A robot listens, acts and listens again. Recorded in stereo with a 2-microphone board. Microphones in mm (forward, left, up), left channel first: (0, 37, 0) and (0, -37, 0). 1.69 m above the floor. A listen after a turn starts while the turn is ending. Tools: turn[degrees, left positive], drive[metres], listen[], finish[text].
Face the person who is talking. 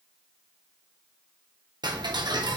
Action: listen[]
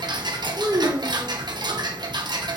Thought: The child speaking: about 65° right or 115° right.
Action: turn[-65]
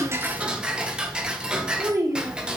Thought: So it is at 50° right.
Action: turn[-50]
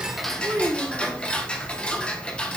Thought: The child speaking is now 25° right.
Action: turn[-25]
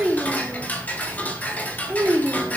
Thought: The child speaking is now 15° right.
Action: turn[-15]
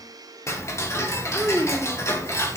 Action: finish[Facing the child speaking, 2 to 4 m away.]